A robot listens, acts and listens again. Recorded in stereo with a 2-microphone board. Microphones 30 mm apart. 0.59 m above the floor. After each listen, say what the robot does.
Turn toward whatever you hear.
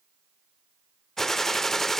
Turn 30° left.
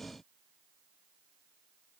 Keep listening.
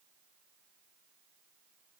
I heard a gunshot, but can't make it out now. It was about 20° right or 140° left.